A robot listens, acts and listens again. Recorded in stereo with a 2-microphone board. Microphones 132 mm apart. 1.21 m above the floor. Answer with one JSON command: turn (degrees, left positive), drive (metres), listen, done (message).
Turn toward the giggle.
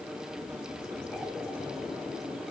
{"listen": true}
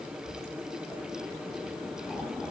{"listen": true}
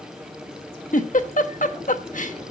{"turn": 90}
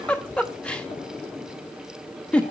{"turn": 10}
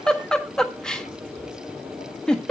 {"done": "Found it: a giggle, straight ahead, 1 to 2 m away."}